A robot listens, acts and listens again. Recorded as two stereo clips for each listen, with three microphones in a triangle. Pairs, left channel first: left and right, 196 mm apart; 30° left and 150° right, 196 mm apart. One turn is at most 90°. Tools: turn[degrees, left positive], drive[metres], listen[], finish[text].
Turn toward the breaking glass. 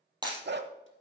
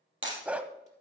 Thought: The breaking glass: 160° right.
Action: turn[-90]
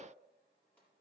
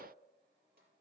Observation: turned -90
Thought: Nothing new. It was at 70° right.
Action: turn[-70]
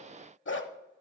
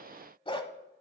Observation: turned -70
Action: finish[Facing where the breaking glass came from. I can't hear it now.]